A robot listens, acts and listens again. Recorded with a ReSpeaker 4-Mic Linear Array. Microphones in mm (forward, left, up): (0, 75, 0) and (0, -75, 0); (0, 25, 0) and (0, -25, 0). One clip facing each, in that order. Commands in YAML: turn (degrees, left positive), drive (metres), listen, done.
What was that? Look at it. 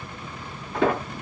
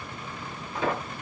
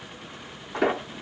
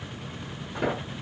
turn: 70
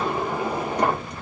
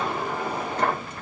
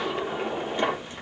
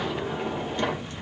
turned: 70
turn: 15
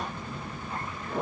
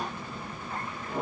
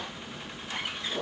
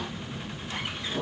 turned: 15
done: "Found it: a sliding door, straight ahead."